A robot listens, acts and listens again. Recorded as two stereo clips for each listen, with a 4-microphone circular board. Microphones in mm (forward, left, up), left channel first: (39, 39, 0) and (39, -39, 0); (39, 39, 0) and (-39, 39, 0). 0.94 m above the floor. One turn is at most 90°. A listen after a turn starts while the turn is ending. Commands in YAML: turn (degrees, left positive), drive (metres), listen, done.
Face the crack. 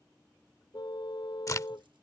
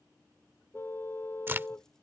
turn: 90
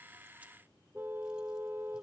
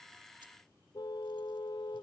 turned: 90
turn: 35
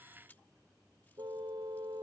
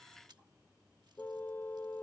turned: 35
done: "I heard a crack from this way, but can't make it out now."